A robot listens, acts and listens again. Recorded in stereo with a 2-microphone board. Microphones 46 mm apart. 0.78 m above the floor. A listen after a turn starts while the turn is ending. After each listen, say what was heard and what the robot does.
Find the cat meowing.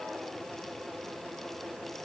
Keep listening.
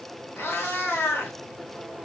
The cat meowing: about 50° left or 130° left. Turn 50° left.
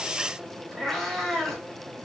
Found it: a cat meowing, straight ahead.